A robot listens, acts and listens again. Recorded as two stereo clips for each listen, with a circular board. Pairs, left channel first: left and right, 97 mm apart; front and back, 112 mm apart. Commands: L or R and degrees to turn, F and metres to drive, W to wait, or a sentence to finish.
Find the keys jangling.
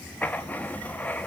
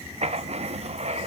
W
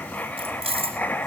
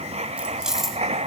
R90
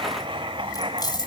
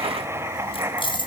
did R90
L45
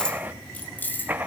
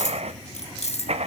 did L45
L20
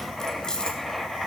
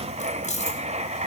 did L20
L10
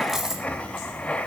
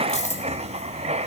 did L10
Facing the keys jangling, 2 to 4 m away.